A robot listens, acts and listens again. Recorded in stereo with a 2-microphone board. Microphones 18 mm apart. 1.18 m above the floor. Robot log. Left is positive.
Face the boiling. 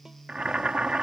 note: The boiling: about 75° right or 105° right.
cmd yaw -75
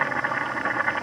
end: Found it: boiling, straight ahead.